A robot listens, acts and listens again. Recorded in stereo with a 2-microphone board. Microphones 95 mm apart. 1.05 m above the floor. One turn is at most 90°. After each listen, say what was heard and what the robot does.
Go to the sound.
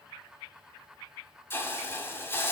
The hiss: about 25° left or 155° left. Turn 25° left.
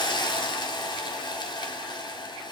So it is at 130° left. Turn 90° left.
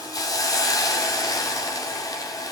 The hiss is now 40° left. Turn 40° left.
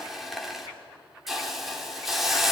Drive 1.0 m forward.
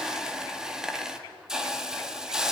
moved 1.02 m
Drive 1.0 m forward.
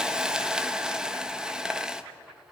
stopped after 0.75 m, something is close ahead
The hiss is now 10° right. Turn 10° right.
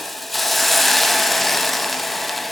I am next to the hiss.